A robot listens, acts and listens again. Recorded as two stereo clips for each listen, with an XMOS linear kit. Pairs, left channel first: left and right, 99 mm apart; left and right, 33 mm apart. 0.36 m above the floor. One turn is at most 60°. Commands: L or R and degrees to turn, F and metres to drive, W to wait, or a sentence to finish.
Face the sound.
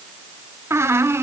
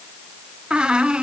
R25
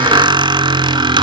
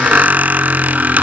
R60
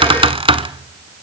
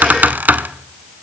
R60
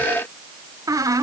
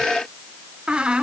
R35
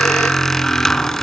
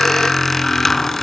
Facing the squeak, 1 to 2 m away.